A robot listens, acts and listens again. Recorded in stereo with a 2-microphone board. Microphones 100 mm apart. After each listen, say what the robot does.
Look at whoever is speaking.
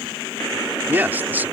Turn 20° right.
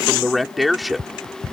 Found it: a man speaking, straight ahead.